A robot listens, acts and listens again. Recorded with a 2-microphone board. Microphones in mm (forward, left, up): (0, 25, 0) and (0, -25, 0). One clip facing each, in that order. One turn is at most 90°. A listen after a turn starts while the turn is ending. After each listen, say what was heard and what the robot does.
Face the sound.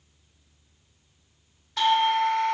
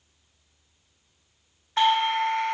The doorbell: about 35° right or 145° right. Turn 35° right.
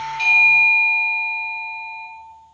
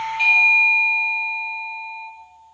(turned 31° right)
So it is at 10° right. Turn 10° right.
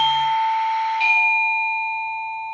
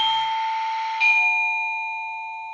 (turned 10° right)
Found it: a doorbell, straight ahead, 1 to 2 m away.